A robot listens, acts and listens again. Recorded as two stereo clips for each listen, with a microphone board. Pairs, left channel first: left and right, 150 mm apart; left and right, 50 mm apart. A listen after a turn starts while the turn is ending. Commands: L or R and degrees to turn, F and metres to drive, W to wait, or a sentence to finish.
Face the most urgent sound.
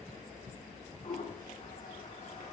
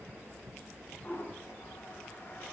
W
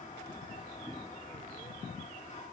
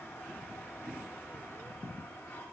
W
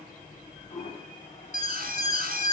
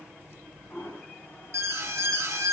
R70
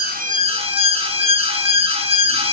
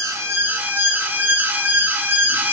R40
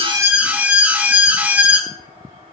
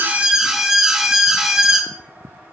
R10
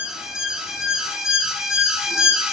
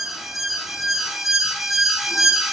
Facing the alarm.